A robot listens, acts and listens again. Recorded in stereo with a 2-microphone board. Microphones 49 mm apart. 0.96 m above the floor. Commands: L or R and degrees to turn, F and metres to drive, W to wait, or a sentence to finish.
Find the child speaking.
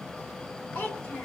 L55
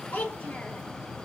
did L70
L35
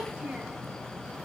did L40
R30
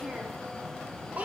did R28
R35
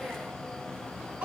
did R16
R30
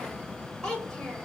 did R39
L10
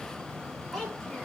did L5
Found it: a child speaking, straight ahead, 2 to 4 m away.